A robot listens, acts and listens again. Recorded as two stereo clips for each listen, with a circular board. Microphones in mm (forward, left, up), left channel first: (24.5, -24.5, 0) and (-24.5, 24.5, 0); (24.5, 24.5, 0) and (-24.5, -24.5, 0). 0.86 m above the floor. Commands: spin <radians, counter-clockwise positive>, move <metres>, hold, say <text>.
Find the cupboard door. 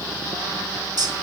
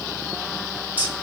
hold
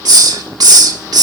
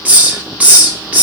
hold
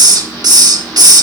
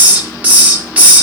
say I can't make out a cupboard door, only a hiss.